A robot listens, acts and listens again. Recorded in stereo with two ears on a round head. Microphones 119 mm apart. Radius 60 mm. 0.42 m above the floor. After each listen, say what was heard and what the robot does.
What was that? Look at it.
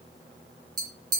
The tapping: about 30° right or 150° right. Turn 30° right.
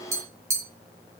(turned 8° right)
The tapping: about 20° right or 160° right. Turn 20° right.
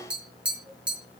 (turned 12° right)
So it is at 10° right. Turn 10° right.
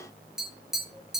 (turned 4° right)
Facing the tapping.